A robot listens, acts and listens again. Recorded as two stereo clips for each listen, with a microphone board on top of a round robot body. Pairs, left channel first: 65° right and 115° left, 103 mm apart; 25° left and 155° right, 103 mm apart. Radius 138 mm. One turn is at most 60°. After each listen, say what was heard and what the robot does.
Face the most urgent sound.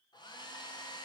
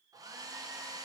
Keep listening.
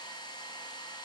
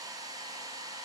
Keep listening.
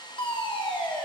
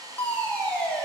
The fire alarm: 50° right. Turn 50° right.
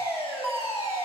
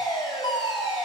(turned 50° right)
The fire alarm is now 15° right. Turn 15° right.
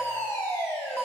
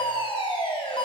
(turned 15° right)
Found it: a fire alarm, straight ahead.